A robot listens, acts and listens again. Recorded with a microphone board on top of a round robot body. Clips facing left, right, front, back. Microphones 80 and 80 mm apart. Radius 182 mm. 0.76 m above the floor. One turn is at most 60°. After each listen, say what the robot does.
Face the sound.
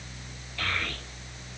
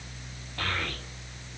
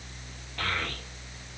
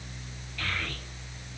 Turn 40° right.
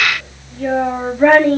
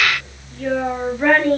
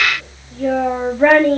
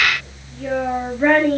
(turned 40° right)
Turn 25° left.
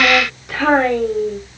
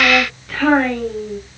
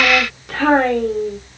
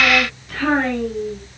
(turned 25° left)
Turn 20° left.
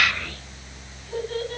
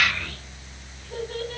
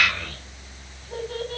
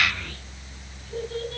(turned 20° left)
Found it: a child speaking, straight ahead.